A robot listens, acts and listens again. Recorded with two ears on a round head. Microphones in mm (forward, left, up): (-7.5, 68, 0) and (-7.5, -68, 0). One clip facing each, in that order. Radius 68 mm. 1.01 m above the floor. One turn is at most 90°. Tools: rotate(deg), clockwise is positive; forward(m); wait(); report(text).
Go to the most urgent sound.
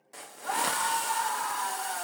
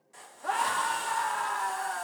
rotate(50)
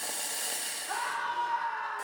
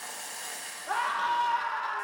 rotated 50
rotate(75)
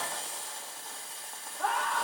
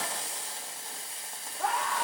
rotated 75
rotate(10)
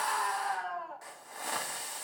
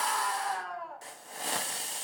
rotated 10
forward(1.0)
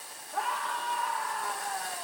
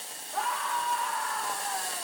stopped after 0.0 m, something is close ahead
report("Something is in my way. I am facing the scream but have not reached it.")